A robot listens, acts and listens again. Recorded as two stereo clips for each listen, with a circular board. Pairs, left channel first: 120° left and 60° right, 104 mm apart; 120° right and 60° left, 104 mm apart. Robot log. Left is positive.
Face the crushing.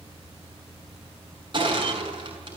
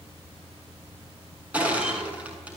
note: The crushing: 20° right.
cmd yaw -20
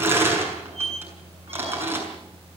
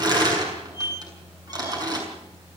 note: The crushing is now 10° left.
cmd yaw +10
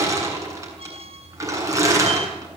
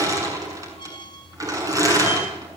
end: Found it: crushing, straight ahead.